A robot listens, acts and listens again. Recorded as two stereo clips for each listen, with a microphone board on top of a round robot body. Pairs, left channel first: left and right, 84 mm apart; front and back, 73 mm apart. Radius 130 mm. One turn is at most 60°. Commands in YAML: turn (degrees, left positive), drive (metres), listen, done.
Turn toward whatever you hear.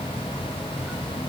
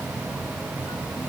listen: true
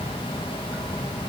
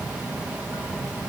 listen: true
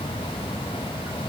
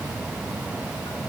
done: "I can't make out anything to turn to."